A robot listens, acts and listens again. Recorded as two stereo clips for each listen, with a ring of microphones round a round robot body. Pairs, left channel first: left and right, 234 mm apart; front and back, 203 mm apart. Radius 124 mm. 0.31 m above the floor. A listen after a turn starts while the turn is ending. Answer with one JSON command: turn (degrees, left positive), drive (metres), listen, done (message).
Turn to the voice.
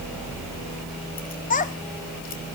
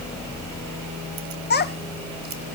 {"turn": 35}
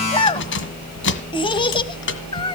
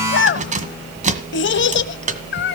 {"turn": 20}
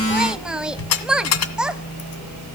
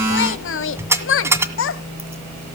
{"done": "Facing the child speaking."}